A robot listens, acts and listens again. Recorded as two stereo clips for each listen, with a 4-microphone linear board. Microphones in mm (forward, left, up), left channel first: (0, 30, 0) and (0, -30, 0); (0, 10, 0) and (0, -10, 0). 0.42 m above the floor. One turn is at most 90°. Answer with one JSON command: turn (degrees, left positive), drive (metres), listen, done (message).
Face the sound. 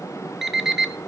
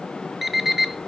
{"turn": -30}
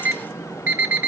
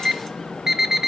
{"turn": -90}
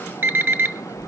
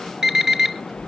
{"turn": -35}
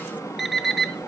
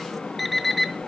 {"done": "Found it: an alarm clock, straight ahead."}